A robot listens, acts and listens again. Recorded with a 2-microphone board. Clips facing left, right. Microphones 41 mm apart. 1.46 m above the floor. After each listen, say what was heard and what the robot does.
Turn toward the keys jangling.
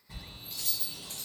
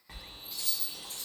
The keys jangling: about 60° left or 120° left. Turn 60° left.
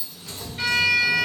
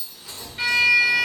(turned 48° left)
So it is at 65° left. Turn 65° left.
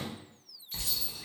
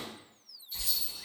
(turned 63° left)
Keep listening.
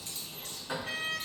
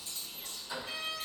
Keep listening.
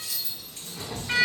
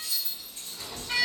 The keys jangling is now 70° left. Turn 70° left.
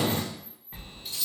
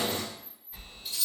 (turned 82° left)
Found it: keys jangling, straight ahead.